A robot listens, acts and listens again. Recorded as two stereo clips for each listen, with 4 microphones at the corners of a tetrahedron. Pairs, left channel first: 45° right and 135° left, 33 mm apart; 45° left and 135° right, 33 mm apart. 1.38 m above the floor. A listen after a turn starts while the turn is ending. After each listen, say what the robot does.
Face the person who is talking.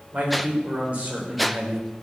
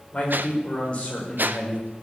Turn 105° left.
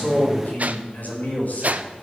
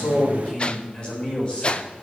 Turn 10° right.
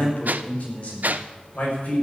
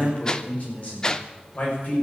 Facing the man speaking, over 4 m away.